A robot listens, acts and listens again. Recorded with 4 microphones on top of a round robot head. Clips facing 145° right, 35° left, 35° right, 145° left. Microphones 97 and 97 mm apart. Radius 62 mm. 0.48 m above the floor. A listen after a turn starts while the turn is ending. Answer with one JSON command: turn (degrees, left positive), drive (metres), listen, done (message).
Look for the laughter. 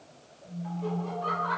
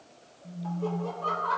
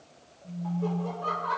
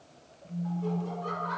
{"turn": -15}
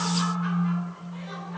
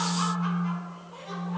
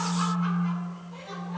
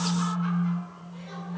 {"listen": true}
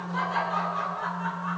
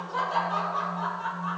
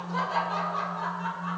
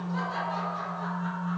{"turn": -25}
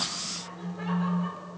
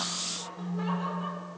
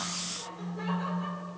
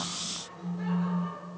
{"turn": -15}
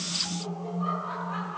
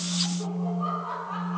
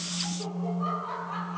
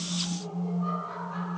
{"turn": -20}
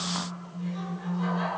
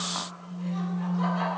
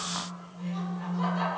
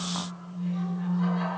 {"listen": true}
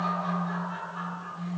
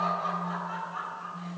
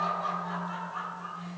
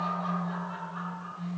{"done": "Facing the laughter."}